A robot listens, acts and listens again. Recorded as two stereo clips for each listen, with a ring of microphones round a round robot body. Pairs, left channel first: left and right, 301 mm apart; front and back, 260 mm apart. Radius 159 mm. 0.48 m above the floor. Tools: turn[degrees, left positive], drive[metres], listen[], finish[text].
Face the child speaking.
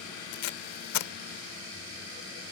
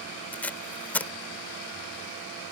Action: listen[]
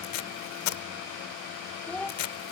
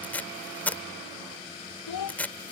Action: finish[Facing the child speaking.]